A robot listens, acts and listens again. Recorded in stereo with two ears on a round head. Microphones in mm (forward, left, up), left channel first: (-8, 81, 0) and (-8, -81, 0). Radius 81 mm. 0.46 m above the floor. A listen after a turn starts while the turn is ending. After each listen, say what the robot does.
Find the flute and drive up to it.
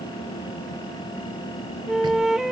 Turn 30° left.
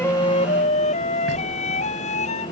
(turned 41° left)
Turn 140° left.
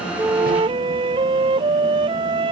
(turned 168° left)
Turn 30° right.
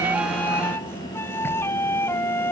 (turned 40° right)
Turn 15° left.
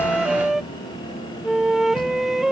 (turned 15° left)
Drive 1.0 m forward.
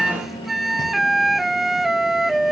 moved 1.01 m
Drive 1.0 m forward.
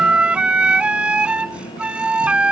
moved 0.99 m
Drive 1.0 m forward.
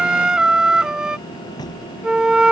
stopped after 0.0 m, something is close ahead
Arrived at the flute, straight ahead.